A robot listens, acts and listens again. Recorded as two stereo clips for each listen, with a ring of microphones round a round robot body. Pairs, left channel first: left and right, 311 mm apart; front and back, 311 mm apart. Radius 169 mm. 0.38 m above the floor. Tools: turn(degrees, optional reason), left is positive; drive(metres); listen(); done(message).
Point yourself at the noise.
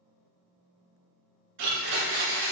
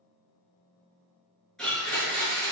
turn(degrees=-90, reason="The blender: 90° right.")
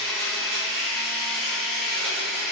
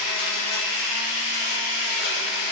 done("Found it: a blender, straight ahead, 1 to 2 m away.")